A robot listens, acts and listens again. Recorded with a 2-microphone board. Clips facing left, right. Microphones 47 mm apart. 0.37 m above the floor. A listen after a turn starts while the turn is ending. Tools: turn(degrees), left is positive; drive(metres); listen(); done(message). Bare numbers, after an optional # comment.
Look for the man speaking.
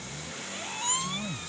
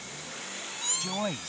# The man speaking: about 60° right or 120° right.
turn(-60)
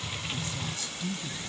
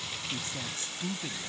# So it is at 40° right.
turn(-40)
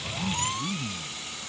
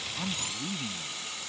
# The man speaking is now 20° right.
turn(-20)
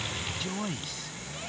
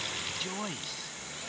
done("Found it: a man speaking, straight ahead.")